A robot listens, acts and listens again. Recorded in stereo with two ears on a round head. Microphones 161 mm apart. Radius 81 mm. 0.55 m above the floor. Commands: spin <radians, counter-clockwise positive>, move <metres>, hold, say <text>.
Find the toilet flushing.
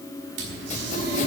spin -1.22
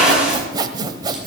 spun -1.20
say Found it: a toilet flushing, straight ahead.